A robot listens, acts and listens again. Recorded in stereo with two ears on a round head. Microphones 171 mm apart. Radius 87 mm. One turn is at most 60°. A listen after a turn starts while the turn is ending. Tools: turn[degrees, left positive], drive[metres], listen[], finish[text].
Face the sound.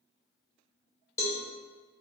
Action: turn[30]
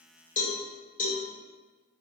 Thought: So it is at 130° left.
Action: turn[60]
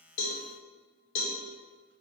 Thought: The cowbell is now 85° left.
Action: turn[60]
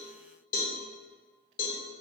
Thought: The cowbell is now 45° left.
Action: turn[45]
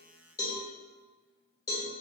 Thought: The cowbell is now 20° left.
Action: turn[20]
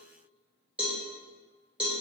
Action: finish[Facing the cowbell.]